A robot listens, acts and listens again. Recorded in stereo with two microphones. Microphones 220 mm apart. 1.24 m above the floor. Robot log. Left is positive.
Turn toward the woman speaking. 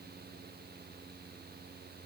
cmd idle
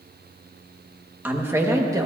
note: The woman speaking: about 15° right or 165° right.
cmd yaw -15
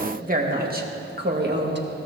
note: So it is at 130° right.
cmd yaw -130
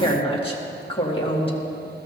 note: The woman speaking is now 25° left.
cmd yaw +25
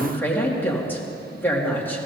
note: The woman speaking is now 10° left.
cmd yaw +10
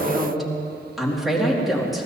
end: Facing the woman speaking.